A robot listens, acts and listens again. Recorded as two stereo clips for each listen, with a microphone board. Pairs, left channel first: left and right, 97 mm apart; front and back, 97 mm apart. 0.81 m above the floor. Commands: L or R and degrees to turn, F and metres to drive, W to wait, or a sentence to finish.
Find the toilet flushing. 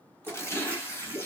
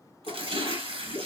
R20
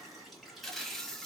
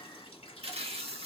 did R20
W
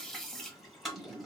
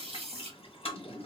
Facing the toilet flushing.